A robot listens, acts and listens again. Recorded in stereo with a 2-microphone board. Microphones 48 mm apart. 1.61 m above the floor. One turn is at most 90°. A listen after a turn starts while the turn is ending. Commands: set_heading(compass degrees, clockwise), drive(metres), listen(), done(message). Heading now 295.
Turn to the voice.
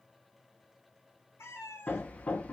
listen()
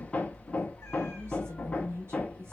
set_heading(355)
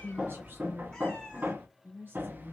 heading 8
set_heading(53)
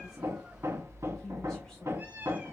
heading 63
set_heading(53)
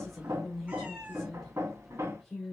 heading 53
done("Facing the woman speaking, 1 to 2 m away.")